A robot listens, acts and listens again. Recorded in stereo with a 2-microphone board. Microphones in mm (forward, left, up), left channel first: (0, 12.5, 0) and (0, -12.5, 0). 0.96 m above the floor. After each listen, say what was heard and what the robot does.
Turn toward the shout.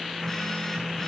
Keep listening.
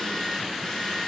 Keep listening.
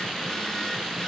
I can't make out a shout to turn to.